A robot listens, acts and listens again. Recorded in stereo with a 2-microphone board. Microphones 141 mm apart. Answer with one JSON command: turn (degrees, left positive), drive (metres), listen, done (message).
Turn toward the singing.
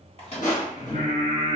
{"turn": 65}
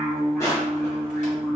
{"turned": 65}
{"done": "Found it: singing, straight ahead."}